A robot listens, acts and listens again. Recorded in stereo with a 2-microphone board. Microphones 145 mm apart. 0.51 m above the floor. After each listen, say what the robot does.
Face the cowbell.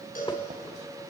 Turn 90° left.
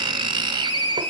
Keep listening.
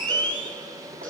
Turn 10° left.
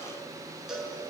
Facing the cowbell.